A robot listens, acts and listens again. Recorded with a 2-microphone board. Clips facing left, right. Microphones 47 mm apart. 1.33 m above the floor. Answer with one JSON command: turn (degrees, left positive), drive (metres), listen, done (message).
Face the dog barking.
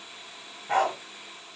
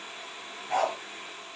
{"turn": 35}
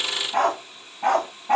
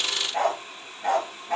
{"turn": 115}
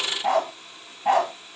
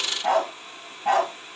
{"turn": 10}
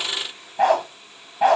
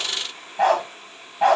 {"done": "Found it: a dog barking, straight ahead."}